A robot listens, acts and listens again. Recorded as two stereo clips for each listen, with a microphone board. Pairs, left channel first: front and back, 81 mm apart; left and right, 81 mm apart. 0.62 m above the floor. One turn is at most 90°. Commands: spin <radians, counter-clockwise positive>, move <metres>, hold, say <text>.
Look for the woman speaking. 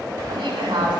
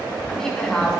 spin 1.57
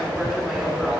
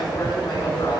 spin 1.57
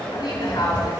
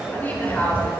spin 0.44
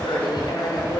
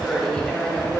spin 0.17
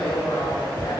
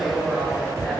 say Found it: a woman speaking, straight ahead.